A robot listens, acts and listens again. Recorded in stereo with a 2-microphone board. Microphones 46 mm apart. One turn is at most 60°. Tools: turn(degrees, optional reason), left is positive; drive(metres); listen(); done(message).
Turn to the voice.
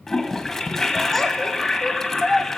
turn(degrees=30)
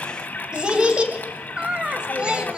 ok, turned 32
turn(degrees=-25, reason="So it is at 25° right.")
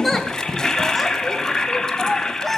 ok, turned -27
done("Found it: a child speaking, straight ahead, 1 to 2 m away.")